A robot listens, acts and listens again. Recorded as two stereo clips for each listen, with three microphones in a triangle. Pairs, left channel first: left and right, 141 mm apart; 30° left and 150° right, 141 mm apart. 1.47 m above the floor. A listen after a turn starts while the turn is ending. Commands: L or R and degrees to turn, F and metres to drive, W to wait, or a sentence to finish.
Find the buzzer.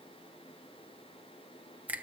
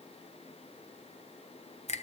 W
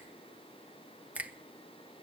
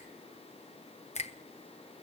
W
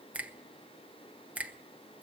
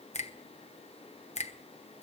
I can't make out a buzzer, only a finger snap.